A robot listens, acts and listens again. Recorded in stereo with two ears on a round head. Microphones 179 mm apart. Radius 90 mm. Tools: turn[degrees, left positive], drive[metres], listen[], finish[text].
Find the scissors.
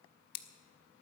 Thought: The scissors: about 50° left or 130° left.
Action: turn[50]
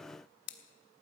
Thought: So it is at 70° left.
Action: turn[70]
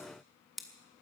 Action: finish[Facing the scissors, 1 to 2 m away.]